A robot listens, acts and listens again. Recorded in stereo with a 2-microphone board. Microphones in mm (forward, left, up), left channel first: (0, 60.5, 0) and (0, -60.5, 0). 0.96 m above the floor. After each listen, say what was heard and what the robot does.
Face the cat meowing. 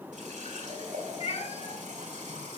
The cat meowing: about 65° left or 115° left. Turn 65° left.
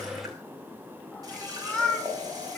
So it is at 10° left. Turn 10° left.
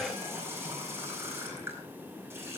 Keep listening.
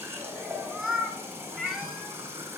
Facing the cat meowing, 2 to 4 m away.